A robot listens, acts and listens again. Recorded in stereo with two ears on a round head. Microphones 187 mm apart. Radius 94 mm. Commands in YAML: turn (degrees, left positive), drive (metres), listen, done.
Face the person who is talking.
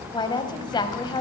turn: 20
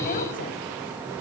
listen: true
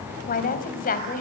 turn: 135
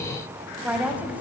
done: "Found it: a woman speaking, straight ahead."